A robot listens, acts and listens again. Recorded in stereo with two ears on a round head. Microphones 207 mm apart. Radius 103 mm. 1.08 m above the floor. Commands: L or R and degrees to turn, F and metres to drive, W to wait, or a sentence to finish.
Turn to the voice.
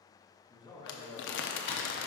L20
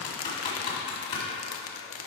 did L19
W
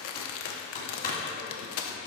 W
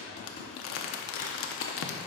I heard a man speaking, but can't make it out now. It was about straight ahead or 140° left.